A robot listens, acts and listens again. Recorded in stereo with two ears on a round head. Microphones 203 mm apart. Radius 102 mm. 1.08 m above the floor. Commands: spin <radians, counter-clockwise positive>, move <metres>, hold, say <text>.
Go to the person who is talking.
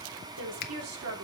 spin -1.22
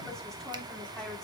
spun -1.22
hold
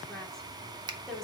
move 1.0
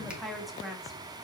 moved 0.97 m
move 1.0
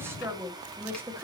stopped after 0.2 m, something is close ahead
spin -0.17
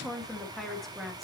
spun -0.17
say Arrived at the woman speaking, straight ahead.